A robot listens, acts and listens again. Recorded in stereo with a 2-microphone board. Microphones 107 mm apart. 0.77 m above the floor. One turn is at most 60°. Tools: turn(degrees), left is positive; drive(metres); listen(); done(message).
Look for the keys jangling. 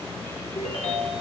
listen()
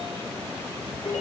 listen()
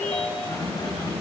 turn(degrees=60)
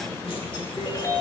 listen()
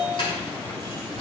turn(degrees=50)
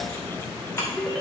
turn(degrees=20)
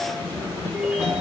turn(degrees=10)
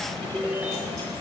listen()
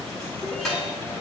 done("Facing the keys jangling.")